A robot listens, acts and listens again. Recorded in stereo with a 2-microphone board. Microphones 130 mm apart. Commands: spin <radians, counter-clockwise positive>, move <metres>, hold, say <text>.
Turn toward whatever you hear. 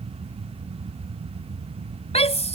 spin 0.96
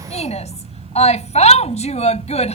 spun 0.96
spin 1.13
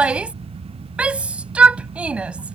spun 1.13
spin -0.17
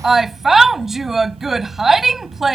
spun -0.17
say Facing the shout.